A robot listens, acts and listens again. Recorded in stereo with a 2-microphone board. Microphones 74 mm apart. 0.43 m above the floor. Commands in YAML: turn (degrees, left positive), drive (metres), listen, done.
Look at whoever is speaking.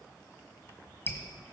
listen: true
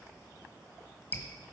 listen: true
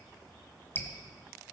done: "I can't make out anyone speaking to turn to."